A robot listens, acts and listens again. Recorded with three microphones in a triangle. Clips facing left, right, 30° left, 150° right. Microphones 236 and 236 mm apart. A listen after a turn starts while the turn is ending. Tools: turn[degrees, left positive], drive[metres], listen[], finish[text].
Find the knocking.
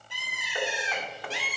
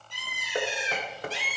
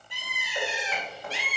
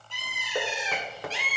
Thought: The knocking: 140° right.
Action: turn[-140]
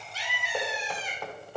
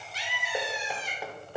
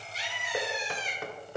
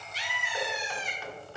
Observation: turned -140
Thought: The knocking is now 10° right.
Action: turn[-10]
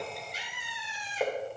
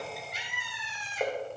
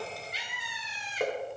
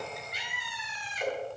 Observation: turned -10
Action: finish[Facing the knocking.]